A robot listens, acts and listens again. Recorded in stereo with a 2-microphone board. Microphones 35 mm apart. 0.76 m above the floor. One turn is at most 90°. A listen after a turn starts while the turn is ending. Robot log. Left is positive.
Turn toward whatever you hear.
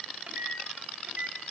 note: The microwave: about 40° right or 140° right.
cmd yaw -40
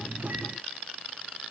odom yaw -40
cmd idle
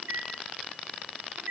note: So it is at 100° right.
cmd yaw -90
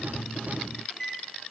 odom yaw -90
end: Facing the microwave.